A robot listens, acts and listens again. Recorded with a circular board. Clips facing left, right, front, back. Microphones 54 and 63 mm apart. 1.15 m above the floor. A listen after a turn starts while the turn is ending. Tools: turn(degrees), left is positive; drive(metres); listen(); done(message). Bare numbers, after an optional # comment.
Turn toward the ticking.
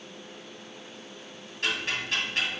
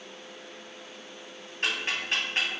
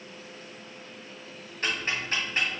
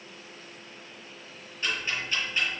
# The ticking: 35° right.
turn(-35)
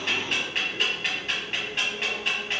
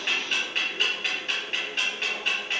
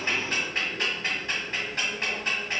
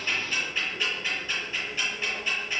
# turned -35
done("Facing the ticking.")